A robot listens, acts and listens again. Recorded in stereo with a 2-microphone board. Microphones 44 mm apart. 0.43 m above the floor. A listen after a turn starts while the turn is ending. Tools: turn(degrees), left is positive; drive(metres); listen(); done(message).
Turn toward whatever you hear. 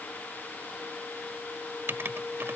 turn(degrees=-60)
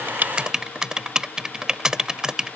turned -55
turn(degrees=-15)
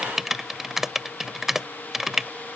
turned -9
turn(degrees=-10)
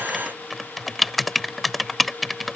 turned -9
done("Found it: writing, straight ahead.")